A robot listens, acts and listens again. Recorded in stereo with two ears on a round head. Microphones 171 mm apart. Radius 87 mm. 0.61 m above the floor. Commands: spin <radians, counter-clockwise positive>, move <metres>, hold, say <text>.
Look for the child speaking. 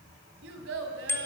spin -1.57
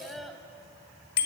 say Facing the child speaking.